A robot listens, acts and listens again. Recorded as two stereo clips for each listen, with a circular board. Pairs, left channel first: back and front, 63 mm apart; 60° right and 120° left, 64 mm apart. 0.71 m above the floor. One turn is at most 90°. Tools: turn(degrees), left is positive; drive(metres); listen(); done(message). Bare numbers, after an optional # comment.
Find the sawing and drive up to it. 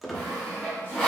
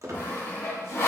# The sawing: 105° right.
turn(-90)
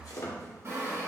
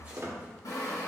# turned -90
# The sawing is now 45° right.
turn(-45)
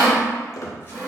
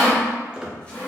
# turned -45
drive(1.0)
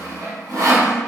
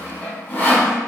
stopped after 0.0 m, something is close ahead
# The sawing is now 10° right.
turn(-10)
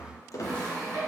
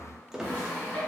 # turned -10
done("Blocked. The sawing is further on, straight ahead.")